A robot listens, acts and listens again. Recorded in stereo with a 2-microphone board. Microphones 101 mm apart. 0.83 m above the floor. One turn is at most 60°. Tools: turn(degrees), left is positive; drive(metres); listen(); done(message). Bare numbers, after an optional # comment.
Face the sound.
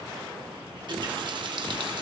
# The running tap: about 50° right or 130° right.
turn(-50)
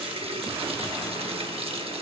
# So it is at 80° right.
turn(-60)
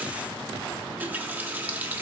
# The running tap is now 20° right.
turn(-20)
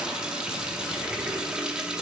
# The running tap is now 10° right.
turn(-10)
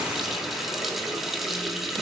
done("Facing the running tap.")